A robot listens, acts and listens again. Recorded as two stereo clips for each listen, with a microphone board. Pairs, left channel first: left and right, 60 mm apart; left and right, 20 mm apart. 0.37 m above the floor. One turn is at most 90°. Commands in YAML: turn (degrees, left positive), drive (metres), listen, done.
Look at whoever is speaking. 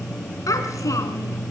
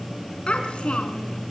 turn: 70
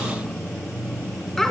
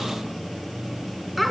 done: "Found it: a child speaking, straight ahead, 2 to 4 m away."